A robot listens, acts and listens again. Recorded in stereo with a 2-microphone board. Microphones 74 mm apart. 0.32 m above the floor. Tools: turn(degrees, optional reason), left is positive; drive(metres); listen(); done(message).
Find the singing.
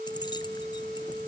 listen()
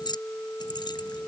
listen()
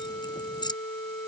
done("I can't make out singing, only keys jangling.")